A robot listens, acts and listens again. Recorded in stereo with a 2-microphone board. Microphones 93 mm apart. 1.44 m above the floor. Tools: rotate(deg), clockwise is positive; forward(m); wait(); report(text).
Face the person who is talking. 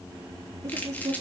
rotate(35)
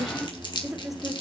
report("Found it: a woman speaking, straight ahead, over 4 m away.")